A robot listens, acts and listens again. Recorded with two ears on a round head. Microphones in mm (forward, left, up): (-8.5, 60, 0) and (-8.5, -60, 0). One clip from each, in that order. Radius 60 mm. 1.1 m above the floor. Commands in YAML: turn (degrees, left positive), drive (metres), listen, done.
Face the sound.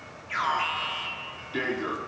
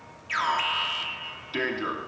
turn: -70
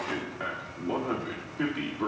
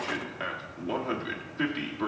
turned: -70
turn: -40
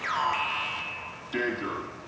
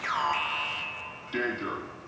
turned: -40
done: "Found it: an alarm, straight ahead, 1 to 2 m away."